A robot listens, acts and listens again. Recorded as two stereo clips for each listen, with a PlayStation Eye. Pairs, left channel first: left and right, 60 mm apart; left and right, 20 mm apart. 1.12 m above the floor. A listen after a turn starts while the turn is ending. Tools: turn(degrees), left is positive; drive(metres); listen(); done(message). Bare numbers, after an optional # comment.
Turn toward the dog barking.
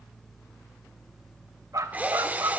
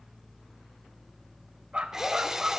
# The dog barking: about 75° right or 105° right.
turn(-75)
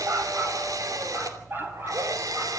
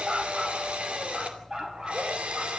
# So it is at 35° right.
turn(-35)
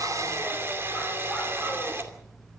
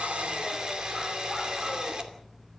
listen()
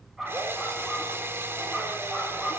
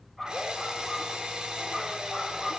done("Found it: a dog barking, straight ahead.")